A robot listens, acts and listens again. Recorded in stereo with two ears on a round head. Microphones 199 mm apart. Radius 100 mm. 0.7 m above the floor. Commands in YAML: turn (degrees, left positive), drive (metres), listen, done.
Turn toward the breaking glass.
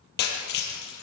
turn: 50
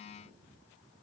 listen: true
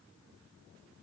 done: "I heard breaking glass, but can't make it out now. It was about straight ahead or 80° left."